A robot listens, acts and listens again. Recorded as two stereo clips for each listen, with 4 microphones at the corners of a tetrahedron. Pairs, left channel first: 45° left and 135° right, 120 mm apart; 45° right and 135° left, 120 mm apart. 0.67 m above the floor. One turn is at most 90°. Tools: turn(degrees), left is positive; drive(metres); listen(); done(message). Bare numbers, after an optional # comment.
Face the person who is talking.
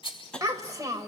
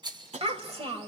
# The child speaking: 165° left.
turn(90)
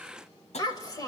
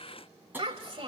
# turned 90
# The child speaking is now 100° left.
turn(90)
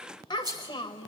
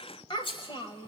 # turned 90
done("Found it: a child speaking, straight ahead, 1 to 2 m away.")